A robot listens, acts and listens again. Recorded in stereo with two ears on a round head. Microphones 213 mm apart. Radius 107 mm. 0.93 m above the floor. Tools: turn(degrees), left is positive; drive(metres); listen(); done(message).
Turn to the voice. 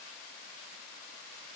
listen()
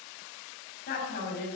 turn(degrees=40)
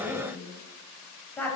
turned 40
done("Facing the woman speaking, over 4 m away.")